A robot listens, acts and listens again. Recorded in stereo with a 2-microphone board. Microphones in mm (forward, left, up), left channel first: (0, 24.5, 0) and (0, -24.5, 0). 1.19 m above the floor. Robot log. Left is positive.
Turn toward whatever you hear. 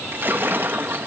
note: The splash: about 50° right or 130° right.
cmd yaw -50
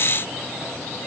cmd idle
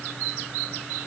end: I heard a splash, but can't make it out now. It was about straight ahead or 80° right.